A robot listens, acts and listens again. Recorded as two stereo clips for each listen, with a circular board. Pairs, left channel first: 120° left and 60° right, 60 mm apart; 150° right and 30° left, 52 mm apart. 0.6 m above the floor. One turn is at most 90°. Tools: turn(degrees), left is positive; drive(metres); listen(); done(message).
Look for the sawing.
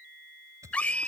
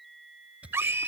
turn(degrees=-30)
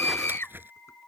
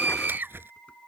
turn(degrees=-10)
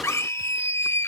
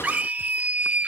listen()
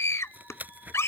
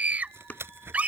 done("Found it: sawing, straight ahead.")